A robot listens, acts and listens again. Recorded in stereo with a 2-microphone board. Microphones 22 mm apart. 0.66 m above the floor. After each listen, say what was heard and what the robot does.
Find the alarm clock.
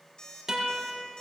The alarm clock: about 30° left or 150° left. Turn 30° left.
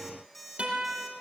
Facing the alarm clock.